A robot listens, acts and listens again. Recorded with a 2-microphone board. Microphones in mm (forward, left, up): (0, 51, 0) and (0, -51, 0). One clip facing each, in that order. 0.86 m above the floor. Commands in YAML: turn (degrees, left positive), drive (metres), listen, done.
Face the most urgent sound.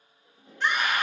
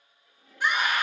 turn: -30
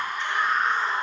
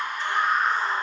turn: -140
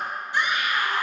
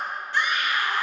turn: 15
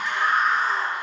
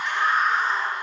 done: "Facing the scream."